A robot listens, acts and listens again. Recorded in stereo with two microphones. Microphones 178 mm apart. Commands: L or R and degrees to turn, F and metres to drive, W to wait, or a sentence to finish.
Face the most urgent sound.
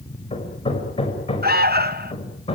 R60
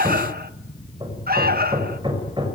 R60
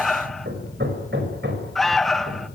Found it: an alarm, straight ahead.